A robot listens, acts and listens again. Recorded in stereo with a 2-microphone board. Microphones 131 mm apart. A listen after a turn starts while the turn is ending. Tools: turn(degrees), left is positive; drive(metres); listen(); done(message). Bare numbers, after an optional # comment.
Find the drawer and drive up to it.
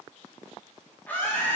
listen()
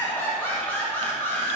listen()
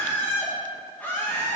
done("I can't make out a drawer, only laughter.")